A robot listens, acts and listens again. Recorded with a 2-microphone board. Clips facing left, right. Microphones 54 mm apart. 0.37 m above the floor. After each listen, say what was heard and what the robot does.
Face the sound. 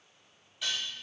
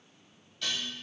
Turn 30° left.
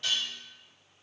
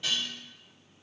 So it is at 15° right. Turn 15° right.
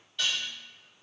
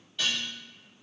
Facing the dishes clattering.